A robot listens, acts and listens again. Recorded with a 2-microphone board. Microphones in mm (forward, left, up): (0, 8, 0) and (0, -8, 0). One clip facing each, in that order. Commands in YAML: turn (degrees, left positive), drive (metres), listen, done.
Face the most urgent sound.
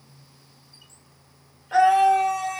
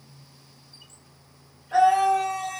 turn: 60
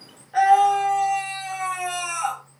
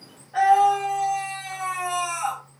turn: 40
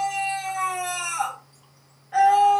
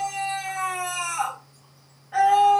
done: "Facing the scream."